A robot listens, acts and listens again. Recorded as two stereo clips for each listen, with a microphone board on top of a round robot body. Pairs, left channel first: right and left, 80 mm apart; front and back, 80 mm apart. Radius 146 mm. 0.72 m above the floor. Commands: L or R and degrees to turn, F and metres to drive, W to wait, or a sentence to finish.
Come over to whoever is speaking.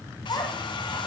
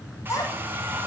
R55
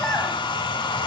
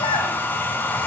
R10
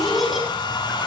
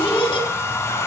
F1.0
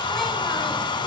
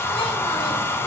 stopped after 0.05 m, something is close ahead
W
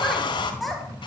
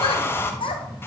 Something is in my way. I am facing the child speaking but have not reached it.